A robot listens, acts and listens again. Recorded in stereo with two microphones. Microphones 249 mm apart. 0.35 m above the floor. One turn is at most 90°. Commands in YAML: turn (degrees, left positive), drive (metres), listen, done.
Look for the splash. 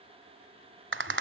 listen: true
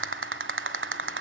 listen: true
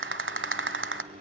done: "I can't make out a splash, only a microwave and a rattle."